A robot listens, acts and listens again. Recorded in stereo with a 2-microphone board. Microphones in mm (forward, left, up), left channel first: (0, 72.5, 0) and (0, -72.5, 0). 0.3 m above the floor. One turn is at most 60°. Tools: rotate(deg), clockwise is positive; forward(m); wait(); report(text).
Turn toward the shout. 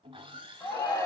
rotate(-20)
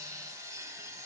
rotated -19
wait()
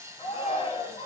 rotate(-60)
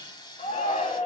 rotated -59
rotate(-60)
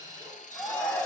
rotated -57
rotate(-15)
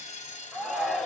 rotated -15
report("Found it: a shout, straight ahead, 2 to 4 m away.")